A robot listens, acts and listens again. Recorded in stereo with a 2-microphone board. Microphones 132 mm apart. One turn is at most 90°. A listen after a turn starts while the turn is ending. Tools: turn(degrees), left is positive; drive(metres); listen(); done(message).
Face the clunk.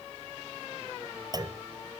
turn(degrees=-30)
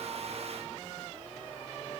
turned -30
listen()
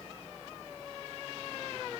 done("I heard a clunk, but can't make it out now. It was about straight ahead or 120° right.")